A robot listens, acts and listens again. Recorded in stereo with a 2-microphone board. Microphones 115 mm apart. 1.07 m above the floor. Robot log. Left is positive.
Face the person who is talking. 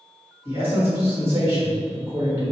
note: The man speaking: about 20° right or 160° right.
cmd yaw -20
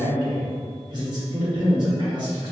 note: So it is at 140° right.
cmd yaw -140
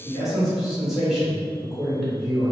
end: Facing the man speaking.